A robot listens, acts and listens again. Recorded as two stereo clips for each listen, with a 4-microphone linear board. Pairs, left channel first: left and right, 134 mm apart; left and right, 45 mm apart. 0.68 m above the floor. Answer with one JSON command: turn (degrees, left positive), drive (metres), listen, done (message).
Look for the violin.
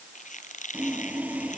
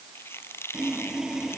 {"listen": true}
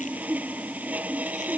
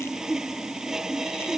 {"listen": true}
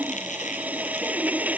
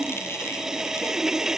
{"done": "I can't make out a violin, only a squeak and sawing."}